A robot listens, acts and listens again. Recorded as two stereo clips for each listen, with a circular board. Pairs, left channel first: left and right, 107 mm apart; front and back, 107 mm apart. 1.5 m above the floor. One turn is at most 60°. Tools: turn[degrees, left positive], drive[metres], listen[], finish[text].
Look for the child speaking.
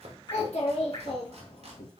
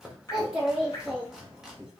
Thought: The child speaking: 105° left.
Action: turn[60]
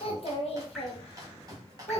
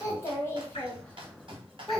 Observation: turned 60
Thought: The child speaking is now 90° left.
Action: turn[60]
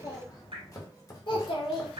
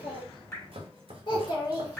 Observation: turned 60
Thought: The child speaking is now 55° left.
Action: turn[55]
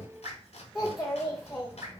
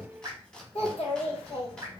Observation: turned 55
Action: finish[Found it: a child speaking, straight ahead, 1 to 2 m away.]